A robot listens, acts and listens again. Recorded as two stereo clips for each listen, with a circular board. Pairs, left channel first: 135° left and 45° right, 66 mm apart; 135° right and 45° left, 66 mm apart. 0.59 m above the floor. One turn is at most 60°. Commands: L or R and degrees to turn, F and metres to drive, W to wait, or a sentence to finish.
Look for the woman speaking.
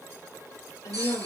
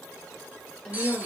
L60
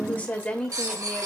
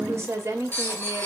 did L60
L60
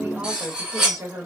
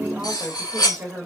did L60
R30
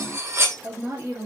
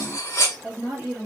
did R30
R25
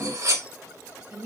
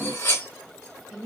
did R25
R20
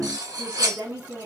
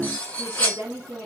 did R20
R10
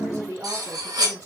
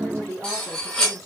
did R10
Found it: a woman speaking, straight ahead, 1 to 2 m away.